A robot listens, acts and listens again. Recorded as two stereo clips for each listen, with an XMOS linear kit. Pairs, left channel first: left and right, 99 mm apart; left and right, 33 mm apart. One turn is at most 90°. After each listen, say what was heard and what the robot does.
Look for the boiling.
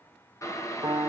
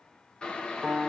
The boiling: about 30° left or 150° left. Turn 30° left.
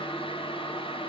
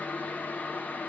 So it is at 120° left. Turn 90° left.
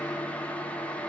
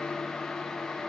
The boiling is now 15° left. Turn 15° left.
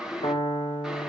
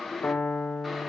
Found it: boiling, straight ahead, 1 to 2 m away.